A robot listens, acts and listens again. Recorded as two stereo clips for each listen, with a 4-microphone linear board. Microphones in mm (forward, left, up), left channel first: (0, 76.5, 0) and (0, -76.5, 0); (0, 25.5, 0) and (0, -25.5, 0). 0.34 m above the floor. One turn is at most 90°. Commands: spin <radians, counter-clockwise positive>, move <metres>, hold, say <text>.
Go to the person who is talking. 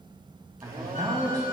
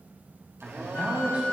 spin -0.44
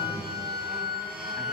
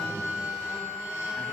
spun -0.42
hold
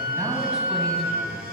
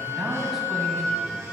hold
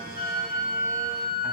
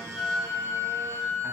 say I heard a man speaking, but can't make it out now. It was about straight ahead or 130° right. I did not reach it.